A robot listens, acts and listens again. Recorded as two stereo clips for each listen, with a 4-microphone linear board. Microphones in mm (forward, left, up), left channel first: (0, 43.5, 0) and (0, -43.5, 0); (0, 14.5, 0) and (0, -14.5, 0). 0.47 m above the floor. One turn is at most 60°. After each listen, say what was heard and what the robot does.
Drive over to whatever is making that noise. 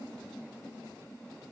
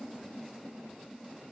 Keep listening.
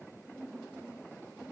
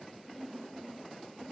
Keep listening.
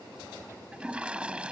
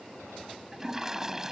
Turn 30° right.
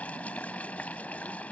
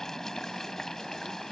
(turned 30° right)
So it is at 15° left. Turn 15° left.
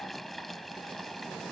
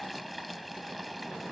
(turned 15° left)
Drive 1.0 m forward.
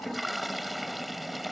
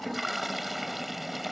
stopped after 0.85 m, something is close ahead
Blocked. The toilet flushing is further on, straight ahead.